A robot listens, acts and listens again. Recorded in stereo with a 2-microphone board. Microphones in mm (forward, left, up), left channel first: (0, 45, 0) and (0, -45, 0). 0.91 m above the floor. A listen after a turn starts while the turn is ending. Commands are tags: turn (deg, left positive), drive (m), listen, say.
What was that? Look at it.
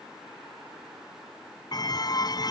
<turn deg="45"/>
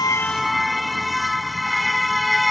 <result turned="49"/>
<say>Facing the car horn.</say>